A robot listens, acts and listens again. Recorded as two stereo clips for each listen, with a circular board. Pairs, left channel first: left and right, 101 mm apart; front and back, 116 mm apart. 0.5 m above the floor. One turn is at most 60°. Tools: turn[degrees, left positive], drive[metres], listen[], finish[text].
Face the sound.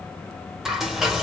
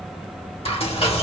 Action: finish[Facing the frying, 1 to 2 m away.]